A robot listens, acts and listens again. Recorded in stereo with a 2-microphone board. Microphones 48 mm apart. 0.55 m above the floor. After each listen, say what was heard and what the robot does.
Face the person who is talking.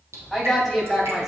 Turn 30° right.
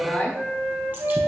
So it is at 20° left. Turn 20° left.
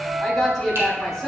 Found it: a woman speaking, straight ahead.